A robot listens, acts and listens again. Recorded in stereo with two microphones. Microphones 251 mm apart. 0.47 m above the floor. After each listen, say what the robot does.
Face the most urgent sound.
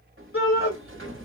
Turn 55° left.
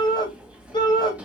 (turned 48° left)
Turn 20° left.
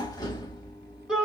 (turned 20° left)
Found it: a shout, straight ahead.